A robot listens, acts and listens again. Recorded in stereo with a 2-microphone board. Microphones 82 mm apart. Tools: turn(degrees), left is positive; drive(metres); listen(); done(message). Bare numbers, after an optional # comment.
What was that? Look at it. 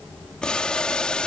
turn(30)
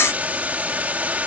# So it is at 20° right.
turn(-20)
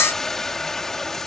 done("Facing the boiling.")